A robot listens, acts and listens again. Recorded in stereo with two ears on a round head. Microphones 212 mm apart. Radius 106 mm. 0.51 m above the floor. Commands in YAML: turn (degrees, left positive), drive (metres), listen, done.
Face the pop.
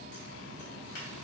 listen: true
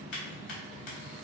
listen: true
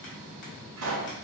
turn: -90
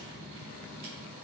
done: "I heard a pop from this way, but can't make it out now."